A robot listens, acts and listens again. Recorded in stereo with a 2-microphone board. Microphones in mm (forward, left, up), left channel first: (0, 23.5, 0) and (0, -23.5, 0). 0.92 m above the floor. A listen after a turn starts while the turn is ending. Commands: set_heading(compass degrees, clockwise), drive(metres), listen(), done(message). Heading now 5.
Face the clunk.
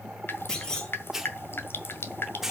set_heading(350)
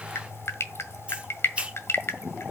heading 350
listen()
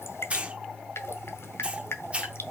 done("I heard a clunk, but can't make it out now. It was about straight ahead or 150° left.")